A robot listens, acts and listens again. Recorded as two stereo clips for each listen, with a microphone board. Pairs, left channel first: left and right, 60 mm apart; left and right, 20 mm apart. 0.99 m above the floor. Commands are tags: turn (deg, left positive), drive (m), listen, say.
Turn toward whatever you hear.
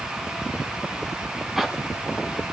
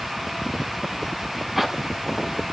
<turn deg="-30"/>
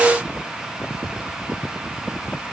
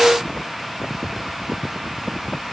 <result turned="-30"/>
<listen/>
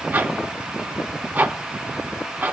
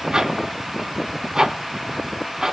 <turn deg="-150"/>
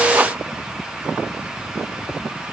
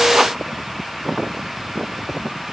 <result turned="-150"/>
<listen/>
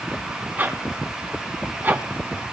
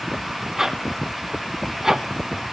<turn deg="-30"/>
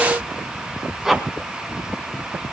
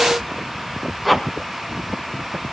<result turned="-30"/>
<say>Facing the zipper, 2 to 4 m away.</say>